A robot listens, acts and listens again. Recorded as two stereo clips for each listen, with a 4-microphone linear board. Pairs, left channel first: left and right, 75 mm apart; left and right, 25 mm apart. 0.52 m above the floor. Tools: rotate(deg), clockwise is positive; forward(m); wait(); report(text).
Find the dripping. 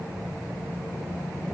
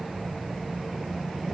wait()
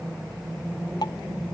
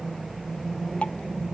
rotate(-65)
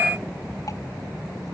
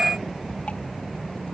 wait()
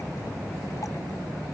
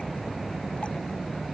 wait()
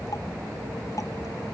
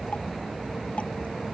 report("I heard dripping, but can't make it out now. It was about straight ahead or 50° left.")